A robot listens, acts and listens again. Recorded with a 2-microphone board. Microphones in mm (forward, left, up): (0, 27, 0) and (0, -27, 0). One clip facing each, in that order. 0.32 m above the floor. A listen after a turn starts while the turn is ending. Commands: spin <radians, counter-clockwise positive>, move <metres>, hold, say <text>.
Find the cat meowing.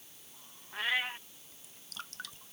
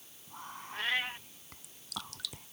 spin 0.52
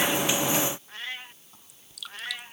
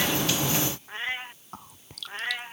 spin -0.52
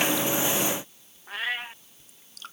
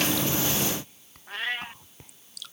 say Facing the cat meowing.